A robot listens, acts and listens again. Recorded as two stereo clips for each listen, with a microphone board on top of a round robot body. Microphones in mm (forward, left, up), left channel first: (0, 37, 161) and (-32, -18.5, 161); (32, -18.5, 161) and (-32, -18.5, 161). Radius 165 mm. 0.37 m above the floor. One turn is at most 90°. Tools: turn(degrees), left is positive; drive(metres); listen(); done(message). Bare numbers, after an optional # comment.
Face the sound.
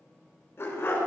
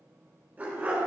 # The dog barking: 115° left.
turn(90)
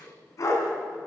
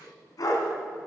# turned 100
# The dog barking is now 25° left.
turn(25)
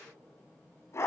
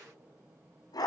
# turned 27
# The dog barking is now 15° left.
turn(15)
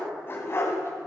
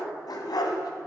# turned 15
# The dog barking is now 10° left.
turn(10)
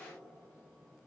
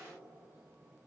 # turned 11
listen()
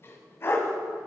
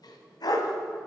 # The dog barking is now 10° left.
turn(10)
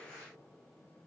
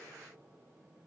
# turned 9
listen()
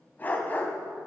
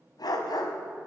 done("Found it: a dog barking, straight ahead, 1 to 2 m away.")